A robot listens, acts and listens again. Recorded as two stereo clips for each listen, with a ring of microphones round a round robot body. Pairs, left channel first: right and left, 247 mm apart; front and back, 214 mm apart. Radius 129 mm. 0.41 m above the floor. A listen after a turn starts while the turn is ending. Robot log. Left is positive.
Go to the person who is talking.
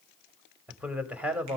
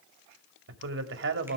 note: The man speaking: 175° left.
cmd yaw +175
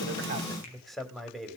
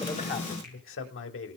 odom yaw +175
cmd fwd 1.0
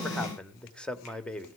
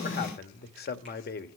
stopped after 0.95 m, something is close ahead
end: I am next to the man speaking.